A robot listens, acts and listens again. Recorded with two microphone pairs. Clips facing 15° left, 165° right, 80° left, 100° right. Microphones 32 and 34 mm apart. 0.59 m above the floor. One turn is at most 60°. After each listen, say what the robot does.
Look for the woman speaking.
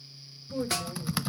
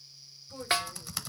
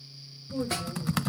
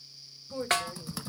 Turn 60° right.
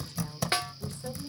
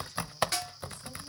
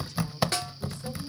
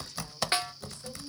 Keep listening.
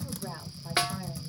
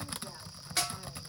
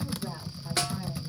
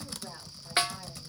Keep listening.
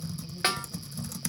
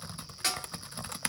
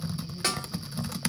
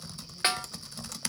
Facing where the woman speaking came from. I can't hear it now.